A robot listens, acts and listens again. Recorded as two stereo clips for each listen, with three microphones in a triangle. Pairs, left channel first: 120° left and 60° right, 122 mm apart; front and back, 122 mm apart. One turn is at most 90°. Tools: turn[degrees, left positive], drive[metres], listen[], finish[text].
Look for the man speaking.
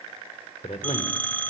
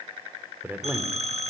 Thought: The man speaking: 105° left.
Action: turn[90]
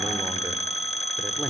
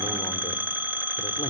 Thought: Nothing new. It was at 15° left.
Action: turn[15]
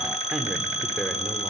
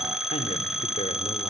Action: listen[]
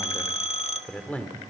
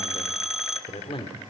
Thought: The man speaking is now 45° left.
Action: turn[45]
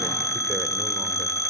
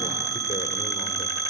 Action: listen[]
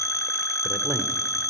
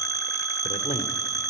Action: listen[]
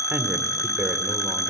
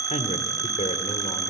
Thought: The man speaking is now 10° left.
Action: turn[10]
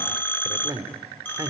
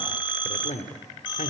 Action: finish[Found it: a man speaking, straight ahead, 2 to 4 m away.]